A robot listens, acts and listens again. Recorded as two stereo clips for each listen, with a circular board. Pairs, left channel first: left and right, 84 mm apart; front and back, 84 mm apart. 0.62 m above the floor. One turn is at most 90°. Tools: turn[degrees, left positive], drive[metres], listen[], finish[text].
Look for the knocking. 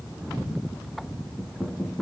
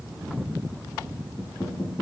Thought: The knocking: 20° left.
Action: turn[20]
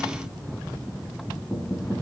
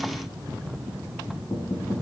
Action: finish[Found it: knocking, straight ahead.]